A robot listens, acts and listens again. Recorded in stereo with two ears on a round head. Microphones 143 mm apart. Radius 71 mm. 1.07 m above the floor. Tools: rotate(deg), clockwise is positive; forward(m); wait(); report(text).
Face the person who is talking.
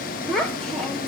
rotate(-30)
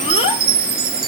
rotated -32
wait()
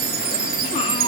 wait()
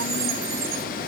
report("I heard a child speaking, but can't make it out now. It was about 30° right or 145° left.")